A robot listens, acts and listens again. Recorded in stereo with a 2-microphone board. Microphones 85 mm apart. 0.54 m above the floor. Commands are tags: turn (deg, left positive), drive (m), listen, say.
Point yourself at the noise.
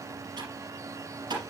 <turn deg="-60"/>
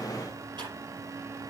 <turn deg="-60"/>
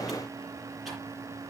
<listen/>
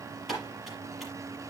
<say>Found it: typing on a keyboard, straight ahead, over 4 m away.</say>